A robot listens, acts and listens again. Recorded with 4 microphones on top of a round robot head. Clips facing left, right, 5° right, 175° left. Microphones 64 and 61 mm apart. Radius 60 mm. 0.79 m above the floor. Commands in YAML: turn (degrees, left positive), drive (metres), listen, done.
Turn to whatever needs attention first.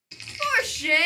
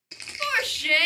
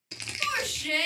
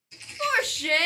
turn: 160
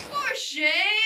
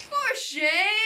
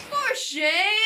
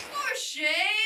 turn: -30
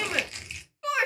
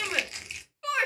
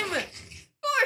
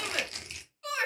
done: "Facing the shout, 1 to 2 m away."